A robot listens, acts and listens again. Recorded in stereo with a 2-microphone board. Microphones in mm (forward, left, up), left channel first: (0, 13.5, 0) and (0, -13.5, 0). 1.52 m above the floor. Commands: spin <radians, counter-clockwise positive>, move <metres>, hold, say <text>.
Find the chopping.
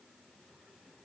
hold
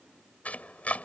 spin 1.13
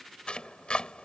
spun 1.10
spin 0.79
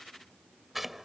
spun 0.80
say Facing the chopping.